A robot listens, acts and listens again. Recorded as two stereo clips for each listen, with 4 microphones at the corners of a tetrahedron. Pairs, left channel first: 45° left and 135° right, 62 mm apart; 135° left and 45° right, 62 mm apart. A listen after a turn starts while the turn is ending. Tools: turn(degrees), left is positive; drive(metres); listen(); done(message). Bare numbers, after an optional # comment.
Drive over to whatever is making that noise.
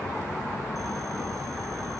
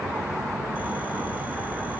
listen()
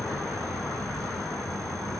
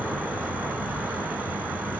listen()
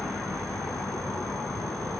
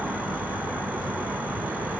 done("I can't make out anything to turn to.")